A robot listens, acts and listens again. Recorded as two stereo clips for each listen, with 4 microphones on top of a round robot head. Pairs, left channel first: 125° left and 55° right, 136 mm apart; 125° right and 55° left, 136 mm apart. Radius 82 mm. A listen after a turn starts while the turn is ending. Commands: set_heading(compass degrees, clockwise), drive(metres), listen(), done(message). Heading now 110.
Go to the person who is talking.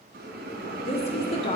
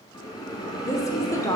set_heading(305)
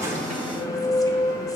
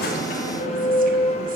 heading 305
listen()
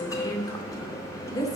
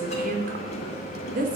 set_heading(245)
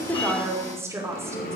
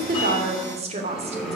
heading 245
set_heading(230)
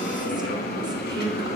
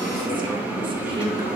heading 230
listen()
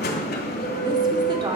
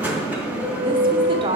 drive(1.0)
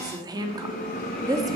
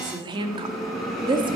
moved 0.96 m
drive(1.0)
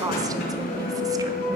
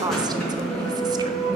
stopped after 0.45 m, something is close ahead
done("I am next to the woman speaking.")